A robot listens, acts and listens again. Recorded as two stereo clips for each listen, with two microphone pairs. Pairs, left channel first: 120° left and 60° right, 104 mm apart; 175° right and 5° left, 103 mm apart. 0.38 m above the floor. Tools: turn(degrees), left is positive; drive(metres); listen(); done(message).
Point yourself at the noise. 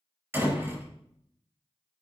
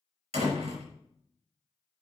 turn(degrees=10)
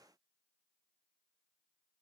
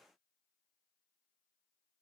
done("I heard a door slam from this way, but can't make it out now.")